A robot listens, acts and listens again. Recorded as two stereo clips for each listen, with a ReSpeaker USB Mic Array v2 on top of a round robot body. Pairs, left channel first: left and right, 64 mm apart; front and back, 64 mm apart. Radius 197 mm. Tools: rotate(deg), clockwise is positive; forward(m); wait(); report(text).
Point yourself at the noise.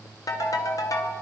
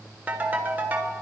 rotate(-115)
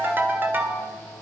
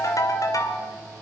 rotate(35)
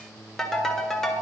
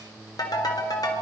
report("Found it: a ringtone, straight ahead.")